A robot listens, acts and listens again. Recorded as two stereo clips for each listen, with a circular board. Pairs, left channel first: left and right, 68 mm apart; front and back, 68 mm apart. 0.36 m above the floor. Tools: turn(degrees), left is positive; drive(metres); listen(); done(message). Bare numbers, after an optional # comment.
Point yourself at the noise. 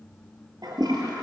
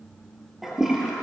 # The toilet flushing: 95° right.
turn(-95)
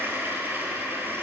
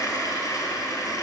# The toilet flushing is now 30° right.
turn(-30)
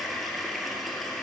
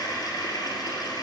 done("Facing the toilet flushing.")